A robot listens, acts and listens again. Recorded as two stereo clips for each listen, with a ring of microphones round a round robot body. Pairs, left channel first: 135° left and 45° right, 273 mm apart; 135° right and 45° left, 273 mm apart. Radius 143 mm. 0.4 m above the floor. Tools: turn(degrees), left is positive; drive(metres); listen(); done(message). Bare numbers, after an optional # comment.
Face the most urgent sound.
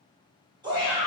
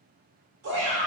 # The shout: 25° left.
turn(25)
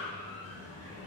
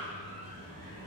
listen()
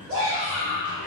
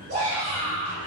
# The shout is now 10° left.
turn(10)
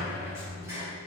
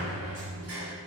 listen()
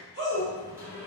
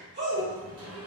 done("Found it: a shout, straight ahead, 1 to 2 m away.")